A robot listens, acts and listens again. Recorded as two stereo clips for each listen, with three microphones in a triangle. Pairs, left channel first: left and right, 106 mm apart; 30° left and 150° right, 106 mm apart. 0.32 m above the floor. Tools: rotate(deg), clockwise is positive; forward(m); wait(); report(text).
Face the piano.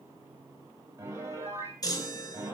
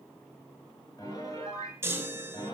rotate(30)
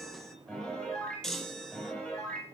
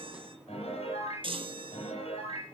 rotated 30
report("Facing the piano, over 4 m away.")